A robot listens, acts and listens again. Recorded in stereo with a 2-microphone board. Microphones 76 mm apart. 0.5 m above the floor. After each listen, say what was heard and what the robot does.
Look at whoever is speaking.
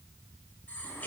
Keep listening.
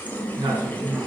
Turn 90° right.
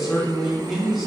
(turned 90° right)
Found it: a man speaking, straight ahead.